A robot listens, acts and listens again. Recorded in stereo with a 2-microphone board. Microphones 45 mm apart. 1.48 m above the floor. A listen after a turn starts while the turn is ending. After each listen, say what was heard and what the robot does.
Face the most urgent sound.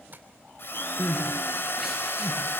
Turn 30° right.
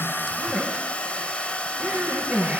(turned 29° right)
So it is at 145° right. Turn 145° right.
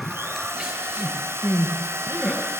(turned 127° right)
The crying is now 15° right. Turn 15° right.
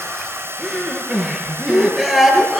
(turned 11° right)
Found it: crying, straight ahead.